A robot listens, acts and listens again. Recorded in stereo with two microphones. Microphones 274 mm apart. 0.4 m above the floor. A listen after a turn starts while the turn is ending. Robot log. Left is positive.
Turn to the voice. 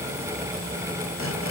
cmd idle
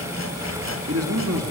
note: The man speaking: about 60° right or 120° right.
cmd yaw -60
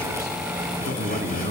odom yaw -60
note: So it is at 45° right.
cmd yaw -45
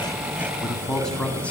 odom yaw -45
end: Facing the man speaking.